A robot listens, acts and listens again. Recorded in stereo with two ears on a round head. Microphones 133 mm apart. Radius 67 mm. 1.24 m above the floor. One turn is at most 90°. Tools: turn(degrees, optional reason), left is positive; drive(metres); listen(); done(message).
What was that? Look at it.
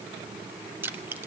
turn(degrees=-30)
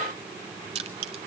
turn(degrees=-90, reason="So it is at 135° right.")
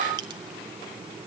turn(degrees=-45, reason="Nothing new. It was at 45° right.")
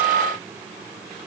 listen()
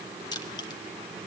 turn(degrees=30, reason="The crushing is now 30° left.")
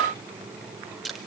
done("Facing the crushing.")